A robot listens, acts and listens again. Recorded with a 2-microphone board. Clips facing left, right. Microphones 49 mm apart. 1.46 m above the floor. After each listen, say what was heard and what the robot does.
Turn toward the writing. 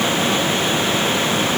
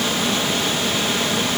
Keep listening.
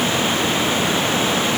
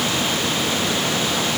Keep listening.
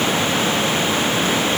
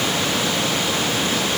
I can't make out writing to turn to.